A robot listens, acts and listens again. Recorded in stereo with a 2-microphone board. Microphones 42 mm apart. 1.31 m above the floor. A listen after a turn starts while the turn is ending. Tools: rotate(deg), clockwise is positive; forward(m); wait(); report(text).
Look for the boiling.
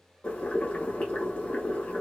rotate(-35)
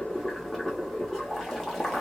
report("Facing the boiling, 1 to 2 m away.")